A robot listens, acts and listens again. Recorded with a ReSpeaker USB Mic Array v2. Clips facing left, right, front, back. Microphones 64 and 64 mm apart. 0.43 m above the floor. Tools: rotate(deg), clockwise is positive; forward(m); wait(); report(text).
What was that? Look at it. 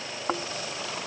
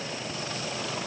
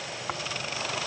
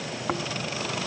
rotate(-100)
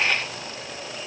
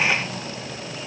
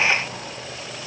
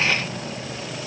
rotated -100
wait()
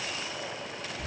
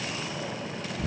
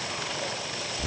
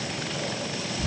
rotate(15)
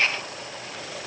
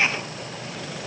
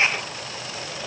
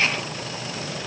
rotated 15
wait()
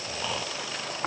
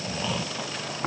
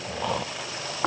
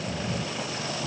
report("Found it: snoring, straight ahead.")